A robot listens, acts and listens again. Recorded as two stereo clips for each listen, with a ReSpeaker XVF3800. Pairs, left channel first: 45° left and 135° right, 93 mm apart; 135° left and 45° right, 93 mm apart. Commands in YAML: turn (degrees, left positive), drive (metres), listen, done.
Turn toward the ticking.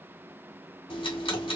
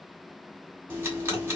turn: 20
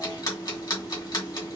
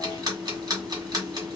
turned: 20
done: "Facing the ticking, 1 to 2 m away."